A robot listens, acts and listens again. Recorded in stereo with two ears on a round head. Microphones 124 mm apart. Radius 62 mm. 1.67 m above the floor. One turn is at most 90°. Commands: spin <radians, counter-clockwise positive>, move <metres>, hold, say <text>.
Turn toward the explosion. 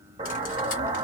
spin -0.70
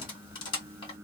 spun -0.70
hold
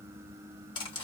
say I heard an explosion, but can't make it out now. It was about straight ahead or 100° right.